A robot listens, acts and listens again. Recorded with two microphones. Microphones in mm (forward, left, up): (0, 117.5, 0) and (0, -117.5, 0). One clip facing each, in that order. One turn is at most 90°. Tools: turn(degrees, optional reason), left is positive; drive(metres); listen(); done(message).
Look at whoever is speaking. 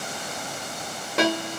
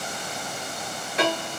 listen()
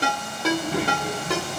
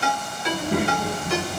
turn(degrees=-55, reason="The child speaking: about 55° right or 125° right.")
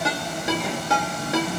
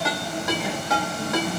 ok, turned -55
done("Found it: a child speaking, straight ahead.")